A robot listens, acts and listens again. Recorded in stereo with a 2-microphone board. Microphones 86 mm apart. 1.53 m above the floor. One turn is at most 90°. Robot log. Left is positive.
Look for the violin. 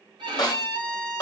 note: The violin: about 60° right or 120° right.
cmd yaw -60
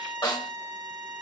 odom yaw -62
note: So it is at 45° right.
cmd yaw -45
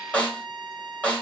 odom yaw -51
end: Found it: a violin, straight ahead, 1 to 2 m away.